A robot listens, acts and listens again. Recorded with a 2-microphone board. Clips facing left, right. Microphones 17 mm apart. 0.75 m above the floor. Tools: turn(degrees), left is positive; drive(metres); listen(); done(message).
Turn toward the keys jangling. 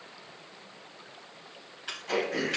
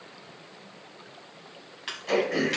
turn(degrees=-50)
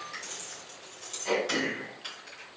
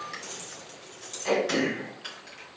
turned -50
done("Facing the keys jangling, over 4 m away.")